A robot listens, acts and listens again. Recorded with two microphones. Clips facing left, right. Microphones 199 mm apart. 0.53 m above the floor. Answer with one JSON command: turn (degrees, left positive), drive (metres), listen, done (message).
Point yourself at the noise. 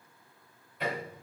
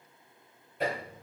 {"turn": -50}
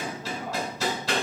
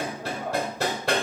{"turn": -70}
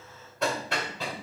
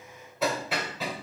{"done": "Found it: hammering, straight ahead, 1 to 2 m away."}